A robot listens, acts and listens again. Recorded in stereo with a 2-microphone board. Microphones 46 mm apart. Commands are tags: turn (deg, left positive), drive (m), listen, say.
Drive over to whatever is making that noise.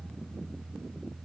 <listen/>
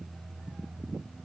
<listen/>
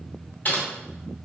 <turn deg="40"/>
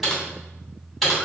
<drive m="1.0"/>
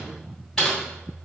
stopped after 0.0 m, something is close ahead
<turn deg="10"/>
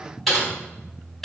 <say>Something is in my way. I am facing the typing on a keyboard but have not reached it.</say>